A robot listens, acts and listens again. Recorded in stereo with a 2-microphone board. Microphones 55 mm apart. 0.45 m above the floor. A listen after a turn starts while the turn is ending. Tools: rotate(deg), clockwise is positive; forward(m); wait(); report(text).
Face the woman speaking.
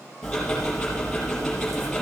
wait()
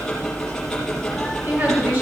rotate(35)
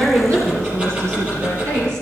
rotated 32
rotate(125)
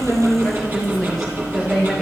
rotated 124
report("Facing the woman speaking.")